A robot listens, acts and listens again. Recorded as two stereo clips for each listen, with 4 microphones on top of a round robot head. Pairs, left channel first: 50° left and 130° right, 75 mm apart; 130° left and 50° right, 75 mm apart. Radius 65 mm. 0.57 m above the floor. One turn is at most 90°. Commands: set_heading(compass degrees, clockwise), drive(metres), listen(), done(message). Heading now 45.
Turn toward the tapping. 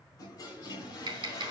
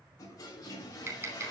set_heading(135)
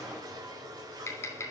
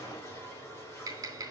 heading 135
done("Found it: tapping, straight ahead.")